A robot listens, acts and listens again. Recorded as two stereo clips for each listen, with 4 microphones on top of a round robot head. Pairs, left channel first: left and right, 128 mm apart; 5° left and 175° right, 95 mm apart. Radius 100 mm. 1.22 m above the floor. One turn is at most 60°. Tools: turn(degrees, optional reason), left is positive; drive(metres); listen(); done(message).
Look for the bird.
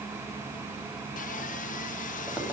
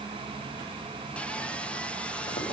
listen()
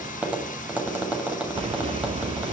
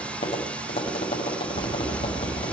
turn(degrees=-50, reason="The bird: 50° right.")
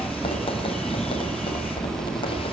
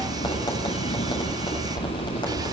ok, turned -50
done("Facing the bird.")